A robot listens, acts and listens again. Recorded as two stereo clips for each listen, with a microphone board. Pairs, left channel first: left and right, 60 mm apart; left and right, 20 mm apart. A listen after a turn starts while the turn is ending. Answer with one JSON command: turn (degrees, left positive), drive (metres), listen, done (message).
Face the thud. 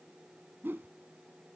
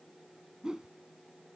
{"listen": true}
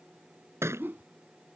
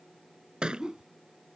{"turn": -45}
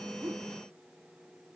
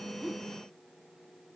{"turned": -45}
{"listen": true}
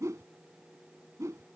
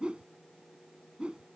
{"done": "I heard a thud, but can't make it out now. It was about straight ahead or 90° right."}